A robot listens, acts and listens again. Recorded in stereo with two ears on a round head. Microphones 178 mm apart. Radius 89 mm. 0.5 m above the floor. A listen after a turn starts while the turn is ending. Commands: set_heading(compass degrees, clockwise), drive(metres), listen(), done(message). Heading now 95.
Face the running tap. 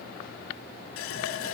set_heading(5)
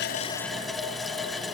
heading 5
done("Found it: a running tap, straight ahead.")